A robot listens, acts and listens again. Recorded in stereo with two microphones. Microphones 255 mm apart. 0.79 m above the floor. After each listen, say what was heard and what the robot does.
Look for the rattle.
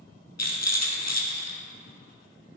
Turn 90° left.
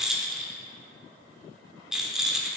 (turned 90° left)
Facing the rattle, 1 to 2 m away.